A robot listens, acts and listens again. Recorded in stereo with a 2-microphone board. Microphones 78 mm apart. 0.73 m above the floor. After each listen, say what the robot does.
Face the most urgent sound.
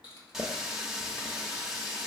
Keep listening.
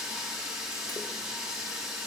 Keep listening.
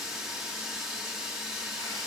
I can't make out anything urgent to turn to.